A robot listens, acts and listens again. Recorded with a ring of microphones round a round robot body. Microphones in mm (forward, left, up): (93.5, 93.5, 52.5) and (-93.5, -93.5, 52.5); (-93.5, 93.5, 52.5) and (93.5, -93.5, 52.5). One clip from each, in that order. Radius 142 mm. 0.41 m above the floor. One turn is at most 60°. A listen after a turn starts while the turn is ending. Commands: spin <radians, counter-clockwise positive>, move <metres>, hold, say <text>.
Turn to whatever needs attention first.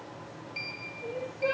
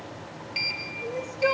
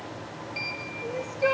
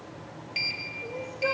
spin -1.05
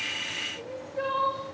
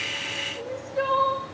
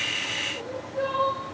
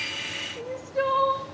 spin -1.05
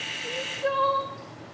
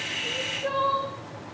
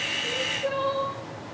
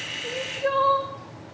spin -0.35
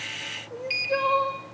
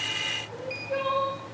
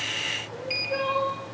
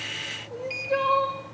say Facing the crying, over 4 m away.